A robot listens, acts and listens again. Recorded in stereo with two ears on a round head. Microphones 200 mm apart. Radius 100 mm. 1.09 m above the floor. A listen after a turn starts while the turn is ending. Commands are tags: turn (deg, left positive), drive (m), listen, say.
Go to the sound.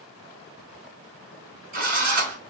<turn deg="-40"/>
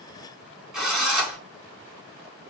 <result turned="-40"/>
<drive m="1.0"/>
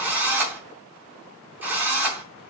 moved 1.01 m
<drive m="1.0"/>
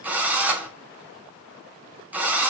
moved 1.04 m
<drive m="1.0"/>
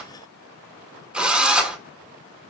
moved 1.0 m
<drive m="1.0"/>
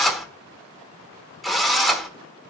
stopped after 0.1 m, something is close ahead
<say>I am next to the drill.</say>